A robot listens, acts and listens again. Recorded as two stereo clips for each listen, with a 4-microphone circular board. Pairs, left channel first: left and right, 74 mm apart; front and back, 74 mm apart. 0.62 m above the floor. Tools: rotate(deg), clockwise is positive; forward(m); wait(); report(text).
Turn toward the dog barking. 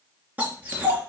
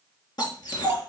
rotate(25)
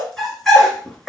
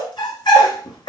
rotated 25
report("Facing the dog barking.")